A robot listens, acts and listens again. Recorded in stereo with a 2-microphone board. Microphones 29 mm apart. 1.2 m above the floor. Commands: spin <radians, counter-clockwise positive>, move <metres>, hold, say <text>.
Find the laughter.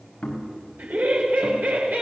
spin -1.57
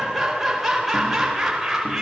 spin -0.17
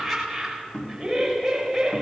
spin -0.17
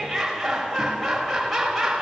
say Facing the laughter, over 4 m away.